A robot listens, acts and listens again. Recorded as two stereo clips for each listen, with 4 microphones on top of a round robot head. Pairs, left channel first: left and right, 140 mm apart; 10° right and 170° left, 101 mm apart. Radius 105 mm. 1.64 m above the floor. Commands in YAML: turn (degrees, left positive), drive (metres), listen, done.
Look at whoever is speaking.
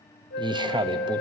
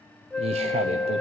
turn: -150
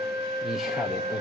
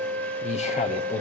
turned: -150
done: "Facing the man speaking."